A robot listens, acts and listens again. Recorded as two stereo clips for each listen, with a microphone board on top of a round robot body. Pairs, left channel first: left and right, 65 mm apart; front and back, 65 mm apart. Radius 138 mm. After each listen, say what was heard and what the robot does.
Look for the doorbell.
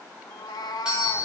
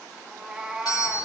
The doorbell: 15° right. Turn 15° right.
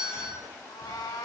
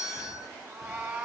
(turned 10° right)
Facing the doorbell, over 4 m away.